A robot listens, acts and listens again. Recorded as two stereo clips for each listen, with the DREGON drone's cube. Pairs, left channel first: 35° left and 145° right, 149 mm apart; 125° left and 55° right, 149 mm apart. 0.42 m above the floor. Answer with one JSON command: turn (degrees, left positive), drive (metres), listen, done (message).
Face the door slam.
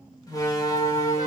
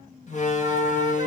{"turn": 100}
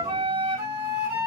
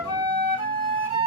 {"done": "I heard a door slam from this way, but can't make it out now."}